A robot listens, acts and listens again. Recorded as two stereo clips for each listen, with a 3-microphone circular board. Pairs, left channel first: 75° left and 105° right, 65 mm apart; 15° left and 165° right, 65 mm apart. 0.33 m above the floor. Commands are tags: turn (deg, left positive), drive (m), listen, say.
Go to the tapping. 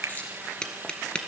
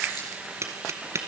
<turn deg="150"/>
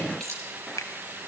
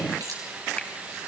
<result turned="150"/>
<listen/>
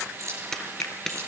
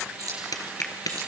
<drive m="1.0"/>
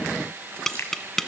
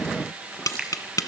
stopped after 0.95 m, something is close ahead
<say>Arrived at the tapping, straight ahead.</say>